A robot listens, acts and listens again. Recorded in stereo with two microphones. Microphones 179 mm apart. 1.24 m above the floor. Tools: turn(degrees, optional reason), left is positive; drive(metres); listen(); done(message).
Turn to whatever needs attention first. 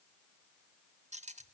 listen()
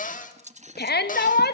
turn(degrees=65, reason="The shout: about 65° left or 115° left.")
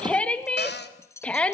done("Found it: a shout, straight ahead.")